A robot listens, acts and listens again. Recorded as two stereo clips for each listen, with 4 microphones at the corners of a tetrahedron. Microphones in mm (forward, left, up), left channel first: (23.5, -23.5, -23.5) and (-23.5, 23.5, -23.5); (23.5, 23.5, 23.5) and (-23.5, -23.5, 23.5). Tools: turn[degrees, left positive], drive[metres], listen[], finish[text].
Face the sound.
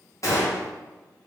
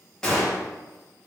Thought: The gunshot: 35° right.
Action: turn[-35]
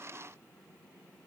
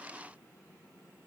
Action: finish[I heard a gunshot from this way, but can't make it out now.]